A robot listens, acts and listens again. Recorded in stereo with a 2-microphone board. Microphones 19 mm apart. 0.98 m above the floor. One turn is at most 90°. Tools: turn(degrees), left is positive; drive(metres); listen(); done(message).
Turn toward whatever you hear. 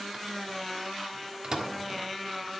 turn(degrees=-45)
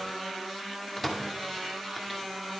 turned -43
done("Facing the microwave.")